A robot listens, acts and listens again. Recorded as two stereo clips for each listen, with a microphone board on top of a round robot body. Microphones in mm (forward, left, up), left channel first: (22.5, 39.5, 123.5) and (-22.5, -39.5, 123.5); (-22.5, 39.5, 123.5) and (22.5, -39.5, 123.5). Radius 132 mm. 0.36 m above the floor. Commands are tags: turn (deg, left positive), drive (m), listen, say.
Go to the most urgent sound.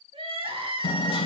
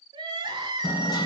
<turn deg="-100"/>
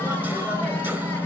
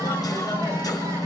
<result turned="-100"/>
<listen/>
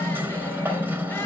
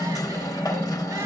<listen/>
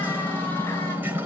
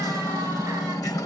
<say>Facing where the crying came from. I can't hear it now. I did not reach it.</say>